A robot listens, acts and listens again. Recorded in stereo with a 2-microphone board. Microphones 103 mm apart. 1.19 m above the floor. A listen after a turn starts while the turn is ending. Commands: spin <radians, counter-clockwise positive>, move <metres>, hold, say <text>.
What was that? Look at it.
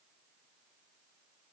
hold
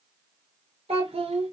spin -1.57
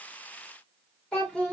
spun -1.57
spin 0.17
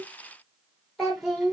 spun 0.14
say Facing the child speaking.